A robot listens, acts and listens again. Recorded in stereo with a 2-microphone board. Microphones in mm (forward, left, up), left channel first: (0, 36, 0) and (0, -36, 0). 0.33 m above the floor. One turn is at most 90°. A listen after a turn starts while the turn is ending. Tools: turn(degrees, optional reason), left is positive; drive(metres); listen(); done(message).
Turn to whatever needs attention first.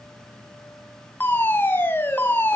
turn(degrees=25, reason="The fire alarm: about 25° left or 155° left.")
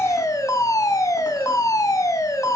turn(degrees=90, reason="So it is at 120° left.")
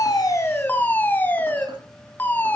turn(degrees=30, reason="The fire alarm is now 30° left.")
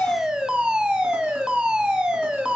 turn(degrees=-10, reason="The fire alarm is now 10° right.")
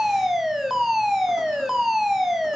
done("Found it: a fire alarm, straight ahead.")